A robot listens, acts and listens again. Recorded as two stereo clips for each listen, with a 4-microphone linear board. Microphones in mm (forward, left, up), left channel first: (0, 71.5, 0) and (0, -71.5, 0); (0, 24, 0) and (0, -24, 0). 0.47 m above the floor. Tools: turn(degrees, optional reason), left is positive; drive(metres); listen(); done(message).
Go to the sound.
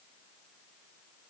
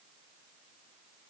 listen()
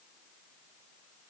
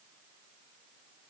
listen()
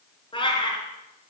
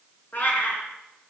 turn(degrees=35, reason="The cat meowing: about 35° left or 145° left.")
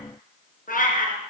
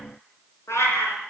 turn(degrees=105, reason="So it is at 105° left.")
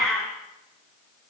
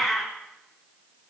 drive(metres=1.0)
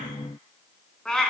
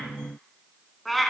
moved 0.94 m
drive(metres=1.0)
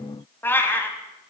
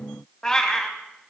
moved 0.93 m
turn(degrees=15, reason="The cat meowing is now 15° left.")
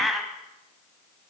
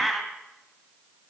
drive(metres=1.0)
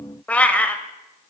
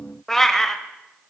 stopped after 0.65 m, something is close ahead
turn(degrees=10, reason="The cat meowing is now 10° left.")
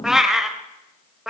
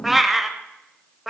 done("I am next to the cat meowing.")